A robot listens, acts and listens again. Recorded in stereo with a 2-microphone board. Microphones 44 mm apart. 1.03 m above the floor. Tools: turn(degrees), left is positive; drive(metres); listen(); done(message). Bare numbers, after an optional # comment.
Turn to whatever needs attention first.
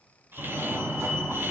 # The fire alarm: about 65° right or 115° right.
turn(-65)
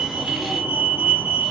# So it is at 40° right.
turn(-40)
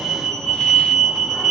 # The fire alarm is now 10° right.
turn(-10)
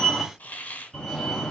done("Facing the fire alarm.")